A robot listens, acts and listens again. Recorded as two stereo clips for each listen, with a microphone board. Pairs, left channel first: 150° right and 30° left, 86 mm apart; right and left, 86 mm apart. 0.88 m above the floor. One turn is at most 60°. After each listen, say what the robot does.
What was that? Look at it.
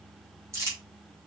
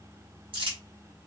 Turn 60° left.
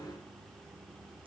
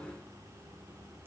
Turn 25° left.
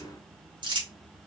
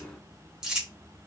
Turn 10° left.
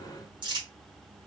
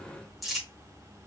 Facing the crumpling, 2 to 4 m away.